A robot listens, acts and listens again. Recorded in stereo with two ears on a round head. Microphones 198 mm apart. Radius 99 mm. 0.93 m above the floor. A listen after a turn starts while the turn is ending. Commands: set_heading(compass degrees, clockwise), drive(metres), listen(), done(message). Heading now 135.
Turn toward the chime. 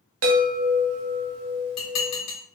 set_heading(200)
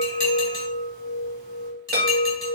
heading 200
set_heading(245)
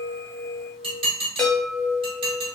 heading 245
done("Found it: a chime, straight ahead.")